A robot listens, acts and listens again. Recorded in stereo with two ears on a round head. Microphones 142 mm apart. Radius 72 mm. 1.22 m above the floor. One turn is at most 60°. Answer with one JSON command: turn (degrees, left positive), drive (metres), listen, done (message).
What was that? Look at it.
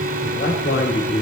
{"turn": 60}
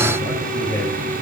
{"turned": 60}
{"turn": 20}
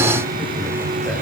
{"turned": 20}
{"listen": true}
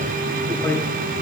{"turn": 15}
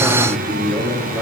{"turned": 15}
{"done": "Found it: a man speaking, straight ahead, over 4 m away."}